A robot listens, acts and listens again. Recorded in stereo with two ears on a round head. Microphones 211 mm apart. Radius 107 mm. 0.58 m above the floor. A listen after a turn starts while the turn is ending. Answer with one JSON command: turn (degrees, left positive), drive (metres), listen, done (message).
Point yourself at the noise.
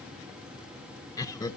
{"turn": 30}
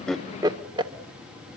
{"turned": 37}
{"turn": -20}
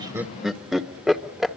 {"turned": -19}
{"done": "Found it: laughter, straight ahead."}